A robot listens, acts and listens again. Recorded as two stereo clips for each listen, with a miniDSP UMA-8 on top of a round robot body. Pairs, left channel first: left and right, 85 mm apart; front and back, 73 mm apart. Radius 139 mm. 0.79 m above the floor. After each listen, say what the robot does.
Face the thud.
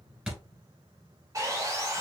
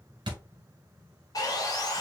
Turn 170° right.
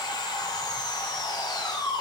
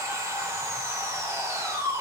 I heard a thud from this way, but can't make it out now.